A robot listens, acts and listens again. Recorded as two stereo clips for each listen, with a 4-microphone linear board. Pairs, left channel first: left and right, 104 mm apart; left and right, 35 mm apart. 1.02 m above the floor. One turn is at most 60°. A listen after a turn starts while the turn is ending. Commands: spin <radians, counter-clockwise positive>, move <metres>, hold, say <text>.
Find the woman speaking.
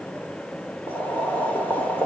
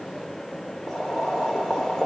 hold
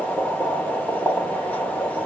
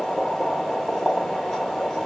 hold
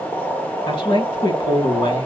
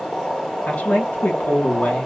spin 0.96
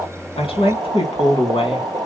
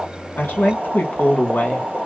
spin 1.05
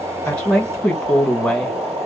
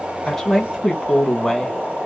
say Facing the woman speaking.